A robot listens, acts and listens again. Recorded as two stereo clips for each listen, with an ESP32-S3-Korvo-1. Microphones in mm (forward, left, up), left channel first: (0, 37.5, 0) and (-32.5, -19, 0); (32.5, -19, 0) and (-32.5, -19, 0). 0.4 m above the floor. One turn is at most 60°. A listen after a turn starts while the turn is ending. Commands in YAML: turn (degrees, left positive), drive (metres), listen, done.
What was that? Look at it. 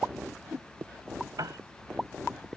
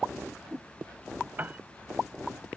turn: -60
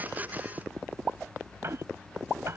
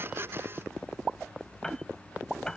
turn: -60
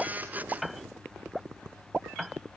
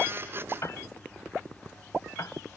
turn: -30
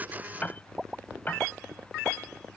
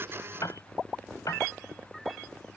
done: "Facing the piano."